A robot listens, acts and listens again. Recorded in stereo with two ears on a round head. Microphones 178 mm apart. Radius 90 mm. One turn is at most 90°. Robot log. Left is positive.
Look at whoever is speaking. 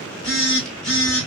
cmd idle
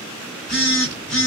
cmd idle
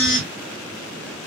end: I can't make out anyone speaking to turn to.